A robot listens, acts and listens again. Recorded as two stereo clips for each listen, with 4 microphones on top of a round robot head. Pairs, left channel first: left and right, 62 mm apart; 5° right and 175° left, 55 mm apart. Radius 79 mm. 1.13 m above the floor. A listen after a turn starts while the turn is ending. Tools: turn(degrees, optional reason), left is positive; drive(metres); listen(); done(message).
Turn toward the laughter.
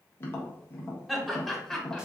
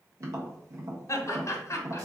done("Facing the laughter, 1 to 2 m away.")